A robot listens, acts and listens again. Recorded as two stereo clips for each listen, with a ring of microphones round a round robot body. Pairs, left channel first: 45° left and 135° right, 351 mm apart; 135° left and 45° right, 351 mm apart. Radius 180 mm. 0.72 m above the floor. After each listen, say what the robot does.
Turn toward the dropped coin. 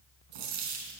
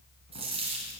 Turn 120° right.
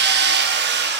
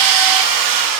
Facing where the dropped coin came from. I can't hear it now.